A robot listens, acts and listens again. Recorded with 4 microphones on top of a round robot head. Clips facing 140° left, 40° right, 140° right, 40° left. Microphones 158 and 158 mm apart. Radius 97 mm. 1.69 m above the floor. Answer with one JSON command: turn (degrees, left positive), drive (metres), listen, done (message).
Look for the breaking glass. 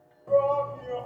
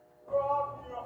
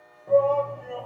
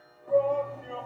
{"listen": true}
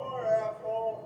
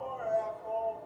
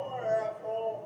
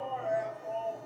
{"listen": true}
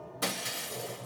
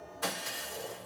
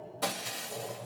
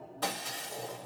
{"turn": 135}
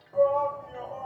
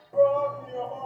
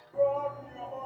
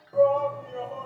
{"done": "I heard breaking glass from this way, but can't make it out now."}